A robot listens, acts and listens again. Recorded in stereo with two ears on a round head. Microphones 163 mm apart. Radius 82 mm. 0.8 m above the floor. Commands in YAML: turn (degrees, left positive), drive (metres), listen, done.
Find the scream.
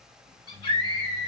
turn: 30
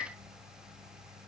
done: "Found it: a scream, straight ahead."